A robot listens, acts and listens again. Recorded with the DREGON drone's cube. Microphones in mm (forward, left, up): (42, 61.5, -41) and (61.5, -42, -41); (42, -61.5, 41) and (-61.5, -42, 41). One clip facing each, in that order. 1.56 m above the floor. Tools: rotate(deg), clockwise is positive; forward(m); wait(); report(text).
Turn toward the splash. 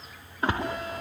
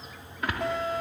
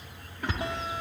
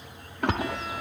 rotate(-160)
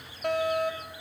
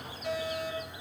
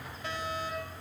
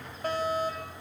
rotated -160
report("I heard a splash from this way, but can't make it out now.")